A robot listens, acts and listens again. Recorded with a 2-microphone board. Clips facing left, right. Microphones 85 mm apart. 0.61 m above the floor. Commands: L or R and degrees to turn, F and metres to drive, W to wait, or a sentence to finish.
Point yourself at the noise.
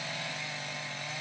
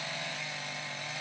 W
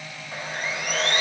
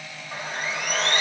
R60
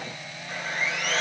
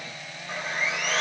R20
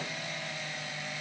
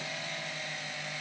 W
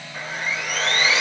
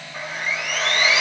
Facing the sawing, 1 to 2 m away.